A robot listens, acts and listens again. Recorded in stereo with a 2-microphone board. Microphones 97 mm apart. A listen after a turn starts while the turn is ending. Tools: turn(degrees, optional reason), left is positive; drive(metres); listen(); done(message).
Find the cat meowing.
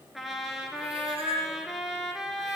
turn(degrees=-90)
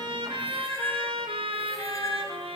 turn(degrees=35, reason="So it is at 35° left.")
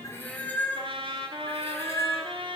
turn(degrees=30, reason="The cat meowing is now 30° left.")
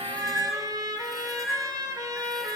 done("Facing the cat meowing, 2 to 4 m away.")